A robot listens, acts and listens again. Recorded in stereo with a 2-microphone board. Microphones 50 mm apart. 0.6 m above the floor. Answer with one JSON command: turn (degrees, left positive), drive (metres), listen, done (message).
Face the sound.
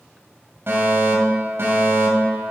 {"turn": -50}
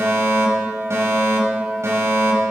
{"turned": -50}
{"turn": -75}
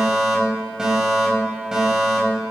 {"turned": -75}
{"turn": -15}
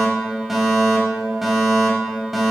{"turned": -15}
{"done": "Found it: a fire alarm, straight ahead."}